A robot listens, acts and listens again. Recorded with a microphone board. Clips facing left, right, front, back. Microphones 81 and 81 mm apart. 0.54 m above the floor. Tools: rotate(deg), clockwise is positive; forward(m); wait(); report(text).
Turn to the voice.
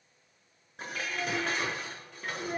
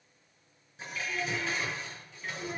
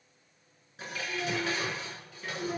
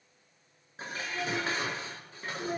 rotate(-165)
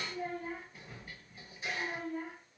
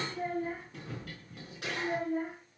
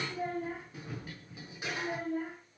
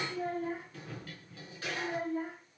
rotate(35)
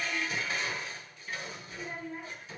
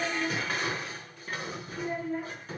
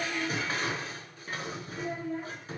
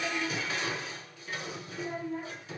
rotate(10)
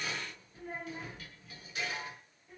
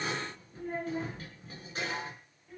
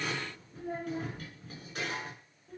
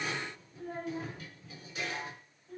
report("Facing the child speaking, over 4 m away.")